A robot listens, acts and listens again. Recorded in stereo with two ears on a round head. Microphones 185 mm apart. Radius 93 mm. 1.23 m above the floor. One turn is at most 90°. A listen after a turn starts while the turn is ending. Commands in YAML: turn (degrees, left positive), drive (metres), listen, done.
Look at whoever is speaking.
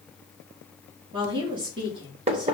turn: -25
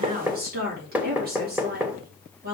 turn: -90
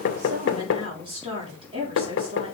turn: -25
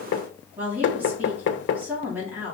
turn: -10
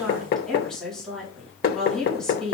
done: "Facing the woman speaking."